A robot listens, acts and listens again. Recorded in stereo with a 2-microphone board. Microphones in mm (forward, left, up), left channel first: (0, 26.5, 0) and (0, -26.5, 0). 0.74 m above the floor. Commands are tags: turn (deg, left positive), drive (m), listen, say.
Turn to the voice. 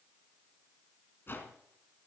<listen/>
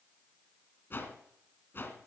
<listen/>
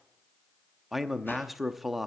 <turn deg="-30"/>
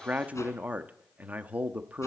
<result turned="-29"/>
<turn deg="-150"/>
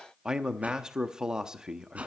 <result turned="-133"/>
<turn deg="-15"/>
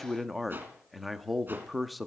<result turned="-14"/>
<say>Facing the man speaking, under 1 m away.</say>